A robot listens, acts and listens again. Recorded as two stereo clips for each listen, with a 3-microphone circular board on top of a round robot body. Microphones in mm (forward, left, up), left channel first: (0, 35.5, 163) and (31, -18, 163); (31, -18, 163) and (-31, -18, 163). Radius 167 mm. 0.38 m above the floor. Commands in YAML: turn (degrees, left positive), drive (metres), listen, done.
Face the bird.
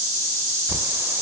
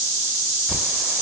turn: -115
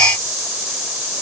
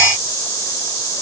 listen: true
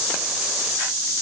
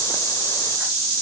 listen: true
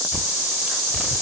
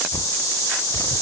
turn: 15
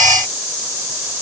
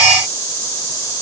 listen: true
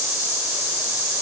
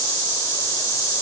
listen: true
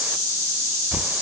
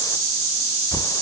done: "Facing the bird."